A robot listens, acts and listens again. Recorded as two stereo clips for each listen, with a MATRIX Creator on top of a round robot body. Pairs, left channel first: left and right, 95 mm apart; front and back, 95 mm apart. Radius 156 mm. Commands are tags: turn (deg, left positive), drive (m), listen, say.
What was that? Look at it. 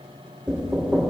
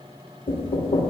<turn deg="-10"/>
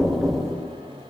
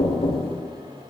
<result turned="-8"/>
<say>Facing the knocking, 1 to 2 m away.</say>